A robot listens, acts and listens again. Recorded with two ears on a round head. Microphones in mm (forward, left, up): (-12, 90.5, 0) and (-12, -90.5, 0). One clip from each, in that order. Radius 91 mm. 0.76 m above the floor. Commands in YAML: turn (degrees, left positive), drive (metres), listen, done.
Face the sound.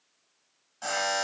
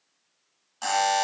turn: -45
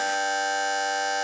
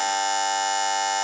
turn: -85
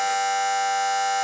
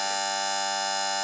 turn: -25
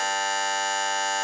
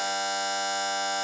turn: 10
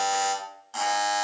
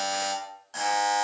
done: "Found it: a buzzer, straight ahead."